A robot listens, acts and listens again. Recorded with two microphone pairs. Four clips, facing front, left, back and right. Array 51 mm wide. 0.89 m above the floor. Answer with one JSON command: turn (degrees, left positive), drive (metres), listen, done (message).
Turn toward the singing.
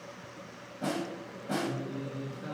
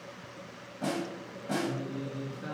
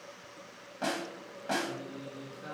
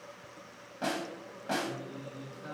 {"turn": 90}
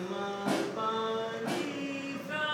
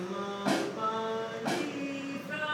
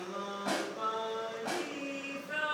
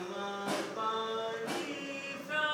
{"turn": -80}
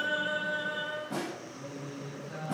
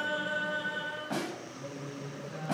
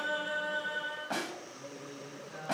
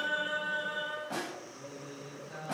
{"turn": -45}
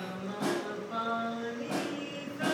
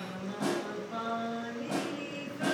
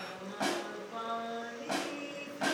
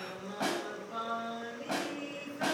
{"done": "Facing the singing."}